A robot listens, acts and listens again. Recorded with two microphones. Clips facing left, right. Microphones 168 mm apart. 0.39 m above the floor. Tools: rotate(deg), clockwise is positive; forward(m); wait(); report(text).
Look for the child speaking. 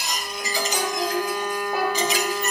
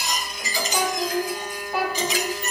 rotate(-50)
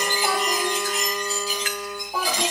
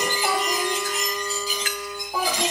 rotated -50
report("Found it: a child speaking, straight ahead, over 4 m away.")